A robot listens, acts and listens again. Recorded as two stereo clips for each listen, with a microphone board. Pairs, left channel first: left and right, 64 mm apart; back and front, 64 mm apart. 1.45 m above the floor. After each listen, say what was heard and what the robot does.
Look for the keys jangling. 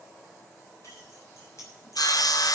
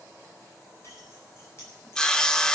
The keys jangling: 130° left. Turn 130° left.
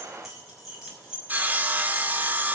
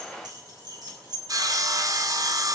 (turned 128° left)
Facing the keys jangling.